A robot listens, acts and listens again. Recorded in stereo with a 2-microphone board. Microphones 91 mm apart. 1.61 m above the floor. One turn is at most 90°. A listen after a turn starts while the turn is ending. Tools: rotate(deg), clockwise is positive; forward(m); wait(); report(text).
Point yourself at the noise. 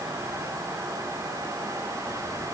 wait()
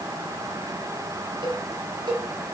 rotate(60)
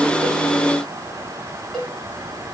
report("Found it: a cowbell, straight ahead, over 4 m away.")